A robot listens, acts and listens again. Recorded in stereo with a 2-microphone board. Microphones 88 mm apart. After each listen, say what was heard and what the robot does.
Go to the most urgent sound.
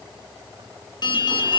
The alarm: about 55° left or 125° left. Turn 55° left.
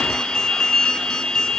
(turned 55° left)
Drive 1.0 m forward.
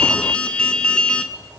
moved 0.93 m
The alarm is now 10° left. Turn 10° left.
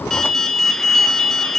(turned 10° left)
Drive 1.0 m forward.
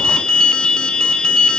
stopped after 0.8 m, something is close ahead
The alarm is now 10° left. Turn 10° left.
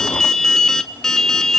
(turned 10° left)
Arrived at the alarm, straight ahead.